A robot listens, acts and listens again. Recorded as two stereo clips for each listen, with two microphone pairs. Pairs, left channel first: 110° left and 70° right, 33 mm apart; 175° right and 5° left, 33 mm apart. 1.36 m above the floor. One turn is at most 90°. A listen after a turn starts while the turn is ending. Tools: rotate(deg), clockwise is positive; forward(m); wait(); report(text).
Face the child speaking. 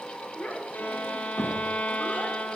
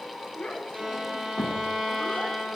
rotate(-90)
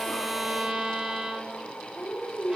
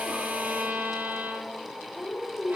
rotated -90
rotate(-80)
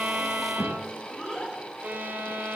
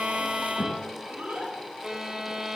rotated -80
rotate(-25)
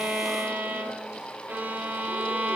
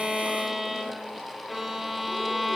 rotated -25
wait()
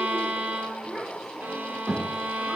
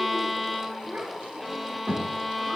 rotate(-10)
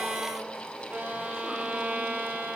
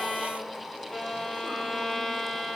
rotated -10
wait()
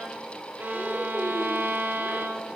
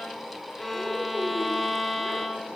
wait()
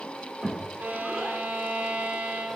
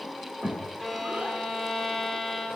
report("Facing the child speaking, 2 to 4 m away.")